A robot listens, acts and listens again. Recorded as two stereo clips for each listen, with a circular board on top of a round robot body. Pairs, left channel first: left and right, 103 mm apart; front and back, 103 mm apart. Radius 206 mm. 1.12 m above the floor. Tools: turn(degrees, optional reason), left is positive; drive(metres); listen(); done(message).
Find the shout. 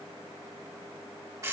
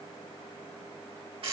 listen()
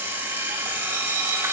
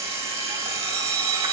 listen()
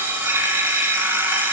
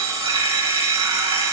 done("I can't make out a shout, only an alarm clock.")